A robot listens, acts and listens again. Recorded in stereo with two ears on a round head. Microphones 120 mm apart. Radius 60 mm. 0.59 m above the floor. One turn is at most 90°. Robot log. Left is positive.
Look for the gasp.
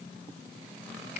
cmd idle
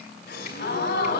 cmd yaw +90
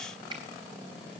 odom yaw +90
end: Facing where the gasp came from. I can't hear it now.